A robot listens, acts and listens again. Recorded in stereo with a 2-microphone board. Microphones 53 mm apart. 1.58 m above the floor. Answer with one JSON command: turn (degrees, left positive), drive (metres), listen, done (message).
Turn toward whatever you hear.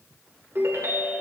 {"turn": -65}
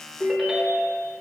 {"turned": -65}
{"turn": -10}
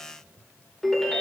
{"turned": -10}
{"done": "Facing the ringtone."}